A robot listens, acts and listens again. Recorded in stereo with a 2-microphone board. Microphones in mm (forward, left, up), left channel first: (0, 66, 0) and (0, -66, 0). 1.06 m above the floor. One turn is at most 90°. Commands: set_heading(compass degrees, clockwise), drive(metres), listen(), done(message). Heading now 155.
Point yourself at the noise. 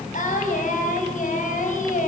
set_heading(65)
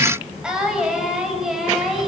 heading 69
done("Facing the singing.")